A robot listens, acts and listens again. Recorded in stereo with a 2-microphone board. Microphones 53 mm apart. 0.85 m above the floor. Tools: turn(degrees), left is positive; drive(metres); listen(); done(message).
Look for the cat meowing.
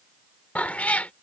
turn(degrees=30)
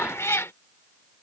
turn(degrees=120)
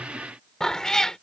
turn(degrees=10)
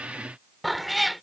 done("Found it: a cat meowing, straight ahead.")